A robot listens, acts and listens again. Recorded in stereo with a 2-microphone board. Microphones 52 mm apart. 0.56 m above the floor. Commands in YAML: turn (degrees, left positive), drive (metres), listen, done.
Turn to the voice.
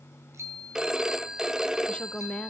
turn: 25
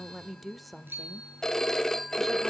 done: "Found it: a woman speaking, straight ahead."